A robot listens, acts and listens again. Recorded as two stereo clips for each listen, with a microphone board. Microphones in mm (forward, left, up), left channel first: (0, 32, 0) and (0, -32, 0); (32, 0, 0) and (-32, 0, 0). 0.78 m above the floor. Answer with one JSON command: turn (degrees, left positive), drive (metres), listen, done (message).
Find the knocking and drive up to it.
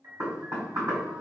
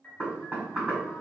{"turn": -120}
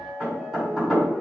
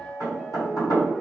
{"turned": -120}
{"turn": -10}
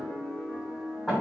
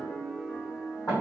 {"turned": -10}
{"drive": 1.0}
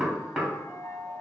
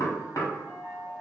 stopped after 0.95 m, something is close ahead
{"turn": -10}
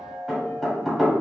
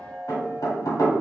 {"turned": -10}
{"done": "I am next to the knocking."}